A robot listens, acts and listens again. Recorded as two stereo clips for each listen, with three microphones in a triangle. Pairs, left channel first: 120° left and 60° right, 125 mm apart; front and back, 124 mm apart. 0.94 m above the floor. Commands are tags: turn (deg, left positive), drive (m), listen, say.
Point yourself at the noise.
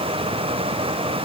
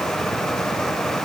<listen/>
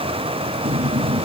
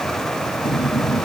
<turn deg="-50"/>
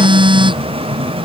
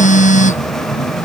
<turn deg="-10"/>
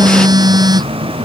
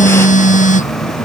<say>Found it: a phone buzzing, straight ahead.</say>